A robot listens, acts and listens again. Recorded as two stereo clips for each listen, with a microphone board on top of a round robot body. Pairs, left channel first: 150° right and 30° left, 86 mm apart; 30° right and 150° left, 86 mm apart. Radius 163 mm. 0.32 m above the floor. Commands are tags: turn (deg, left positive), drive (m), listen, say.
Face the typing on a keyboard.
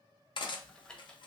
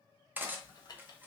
<turn deg="-70"/>
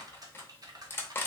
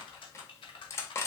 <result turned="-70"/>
<turn deg="-15"/>
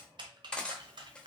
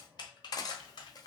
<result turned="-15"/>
<say>Facing the typing on a keyboard, under 1 m away.</say>